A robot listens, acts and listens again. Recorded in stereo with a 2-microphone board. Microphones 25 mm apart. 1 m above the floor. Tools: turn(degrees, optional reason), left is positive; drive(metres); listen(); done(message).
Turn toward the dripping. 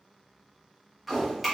turn(degrees=-30)
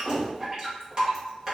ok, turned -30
turn(degrees=-145, reason="So it is at 145° right.")
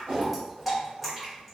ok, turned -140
done("Facing the dripping, 1 to 2 m away.")